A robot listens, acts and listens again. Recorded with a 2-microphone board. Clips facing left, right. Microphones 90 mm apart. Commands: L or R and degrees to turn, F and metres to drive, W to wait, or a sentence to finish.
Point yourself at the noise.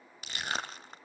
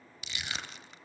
L40
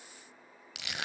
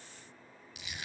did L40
L100
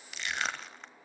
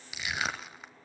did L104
Facing the crushing, 1 to 2 m away.